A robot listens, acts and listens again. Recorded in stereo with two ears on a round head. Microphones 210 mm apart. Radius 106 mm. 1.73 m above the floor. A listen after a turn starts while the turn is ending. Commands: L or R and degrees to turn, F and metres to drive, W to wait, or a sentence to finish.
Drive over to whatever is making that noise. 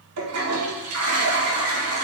R65
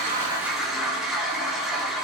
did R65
F1.0
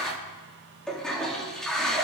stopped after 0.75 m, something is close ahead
Blocked. The toilet flushing is further on, straight ahead.